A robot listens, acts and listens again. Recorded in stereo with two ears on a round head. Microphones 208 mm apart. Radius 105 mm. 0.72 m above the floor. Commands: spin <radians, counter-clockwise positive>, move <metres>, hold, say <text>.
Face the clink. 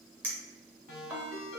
spin -0.52
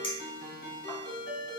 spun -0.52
spin 0.44
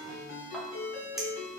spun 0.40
hold
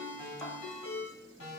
hold
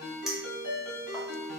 say Found it: a clink, straight ahead, under 1 m away.